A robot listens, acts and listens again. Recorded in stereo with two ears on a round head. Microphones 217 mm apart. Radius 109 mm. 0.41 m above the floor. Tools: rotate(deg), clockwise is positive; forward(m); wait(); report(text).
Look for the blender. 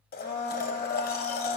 rotate(-40)
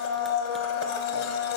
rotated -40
rotate(-100)
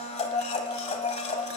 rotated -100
rotate(-30)
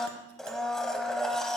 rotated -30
report("Found it: a blender, straight ahead, 1 to 2 m away.")